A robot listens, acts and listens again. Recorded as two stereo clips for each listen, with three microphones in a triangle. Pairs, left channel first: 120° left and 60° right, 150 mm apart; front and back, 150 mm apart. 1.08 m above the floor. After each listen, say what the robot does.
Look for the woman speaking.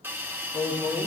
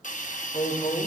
Turn 80° left.
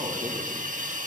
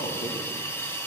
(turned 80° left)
Keep listening.
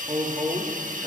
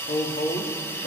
Turn 15° left.
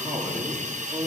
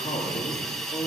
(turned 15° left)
Turn 10° left.
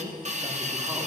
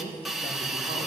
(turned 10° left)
Keep listening.
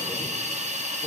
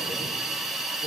Keep listening.
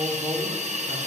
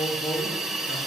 Turn 15° left.
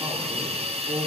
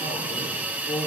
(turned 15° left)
Facing the woman speaking, 2 to 4 m away.